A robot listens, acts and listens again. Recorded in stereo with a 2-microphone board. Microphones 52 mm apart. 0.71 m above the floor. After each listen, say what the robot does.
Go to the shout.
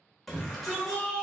Turn 30° left.
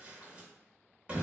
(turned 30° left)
Turn 25° right.
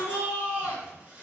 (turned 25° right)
Turn 25° right.
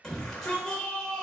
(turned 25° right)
Turn 10° left.
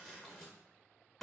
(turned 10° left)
Drive 1.0 m forward.
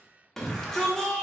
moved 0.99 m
Turn 10° left.
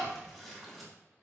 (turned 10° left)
Drive 1.0 m forward.
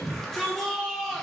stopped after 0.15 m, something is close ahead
I am next to the shout.